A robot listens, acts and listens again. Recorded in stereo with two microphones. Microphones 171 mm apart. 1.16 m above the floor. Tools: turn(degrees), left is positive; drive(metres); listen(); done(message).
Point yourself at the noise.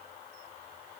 listen()
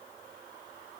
listen()
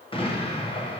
turn(degrees=30)
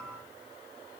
listen()
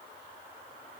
done("I heard an explosion, but can't make it out now. It was about straight ahead or 120° left.")